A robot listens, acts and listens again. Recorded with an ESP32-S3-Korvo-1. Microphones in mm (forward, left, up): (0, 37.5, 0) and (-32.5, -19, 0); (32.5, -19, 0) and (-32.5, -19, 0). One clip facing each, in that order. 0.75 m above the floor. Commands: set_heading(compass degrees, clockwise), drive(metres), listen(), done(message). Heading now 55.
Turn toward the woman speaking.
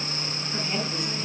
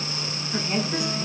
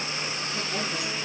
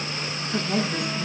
set_heading(250)
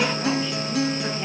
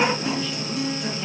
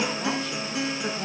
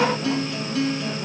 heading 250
listen()
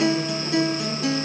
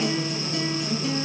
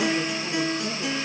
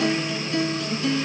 listen()
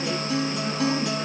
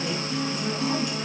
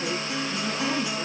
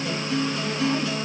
set_heading(265)
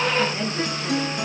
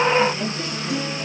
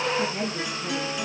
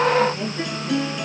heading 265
done("Facing the woman speaking.")